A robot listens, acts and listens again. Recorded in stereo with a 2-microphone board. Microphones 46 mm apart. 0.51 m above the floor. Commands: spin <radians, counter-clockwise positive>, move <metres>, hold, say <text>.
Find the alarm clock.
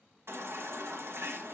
hold
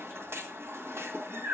hold
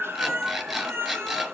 spin -0.52
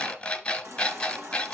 spin 0.44
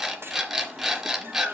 spin -0.17
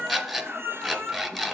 say Found it: an alarm clock, straight ahead.